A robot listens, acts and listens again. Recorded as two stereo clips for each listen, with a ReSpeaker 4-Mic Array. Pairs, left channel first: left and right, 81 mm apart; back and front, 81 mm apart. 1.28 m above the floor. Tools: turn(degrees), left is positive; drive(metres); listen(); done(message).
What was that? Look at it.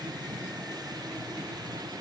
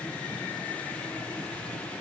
listen()
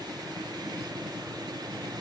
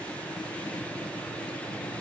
listen()
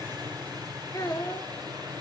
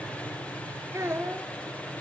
turn(degrees=55)
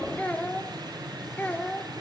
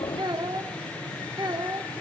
turn(degrees=20)
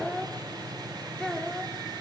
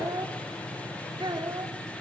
turn(degrees=10)
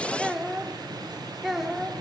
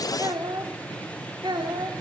done("Facing the child speaking, 2 to 4 m away.")